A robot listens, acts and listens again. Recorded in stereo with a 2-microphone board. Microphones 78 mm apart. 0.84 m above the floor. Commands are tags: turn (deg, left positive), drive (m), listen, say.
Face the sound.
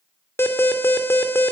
<turn deg="30"/>
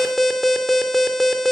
<say>Facing the alarm, 2 to 4 m away.</say>